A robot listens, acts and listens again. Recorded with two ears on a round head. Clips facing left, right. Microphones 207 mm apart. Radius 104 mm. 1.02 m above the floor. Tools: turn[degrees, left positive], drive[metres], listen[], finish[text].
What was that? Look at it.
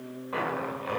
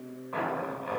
Thought: The zipper: about 45° left or 135° left.
Action: turn[45]
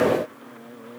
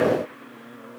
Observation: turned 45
Action: listen[]
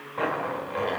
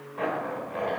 Thought: So it is at 80° left.
Action: turn[80]
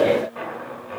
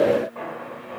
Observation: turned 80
Thought: The zipper is now 20° left.
Action: turn[20]
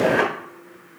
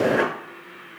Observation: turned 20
Action: finish[Facing the zipper, 1 to 2 m away.]